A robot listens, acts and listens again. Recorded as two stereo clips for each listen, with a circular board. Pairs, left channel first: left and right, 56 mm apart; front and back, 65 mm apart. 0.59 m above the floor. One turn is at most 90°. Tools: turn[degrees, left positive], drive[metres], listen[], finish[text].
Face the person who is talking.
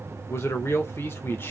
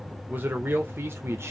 Thought: The man speaking: 135° left.
Action: turn[90]
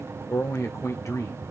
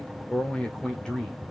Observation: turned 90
Thought: The man speaking is now 75° left.
Action: turn[75]
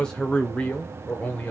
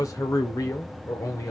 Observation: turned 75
Thought: The man speaking is now 25° left.
Action: turn[25]
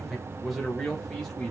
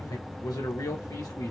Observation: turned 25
Action: finish[Facing the man speaking, 2 to 4 m away.]